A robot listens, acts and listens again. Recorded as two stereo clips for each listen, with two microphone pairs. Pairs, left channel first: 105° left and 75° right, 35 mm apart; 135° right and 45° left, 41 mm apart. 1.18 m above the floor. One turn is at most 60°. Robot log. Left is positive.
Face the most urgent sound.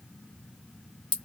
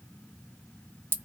cmd idle
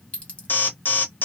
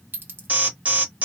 note: The alarm: 90° left.
cmd yaw +60
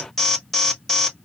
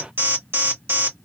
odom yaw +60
note: The alarm is now 25° left.
cmd yaw +25
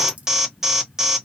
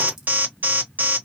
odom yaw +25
end: Facing the alarm.